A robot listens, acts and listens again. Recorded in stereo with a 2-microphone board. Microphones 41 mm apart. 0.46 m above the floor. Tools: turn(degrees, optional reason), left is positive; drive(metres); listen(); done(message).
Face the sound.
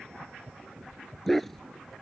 turn(degrees=30)
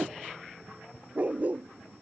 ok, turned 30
turn(degrees=-35, reason="So it is at 35° right.")
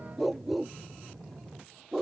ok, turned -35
done("Found it: a dog barking, straight ahead.")